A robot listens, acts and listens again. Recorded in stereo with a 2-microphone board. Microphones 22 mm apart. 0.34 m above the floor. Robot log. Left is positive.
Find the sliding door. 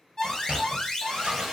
note: The sliding door: about 70° right or 110° right.
cmd yaw -70
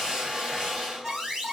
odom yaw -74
cmd idle
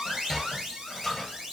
end: Found it: a sliding door, straight ahead, 1 to 2 m away.